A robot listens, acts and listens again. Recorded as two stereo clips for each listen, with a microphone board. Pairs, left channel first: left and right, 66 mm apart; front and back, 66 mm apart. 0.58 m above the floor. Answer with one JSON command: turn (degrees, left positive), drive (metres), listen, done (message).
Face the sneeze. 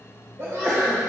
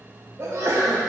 {"turn": -135}
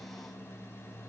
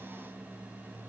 {"done": "I heard a sneeze from this way, but can't make it out now."}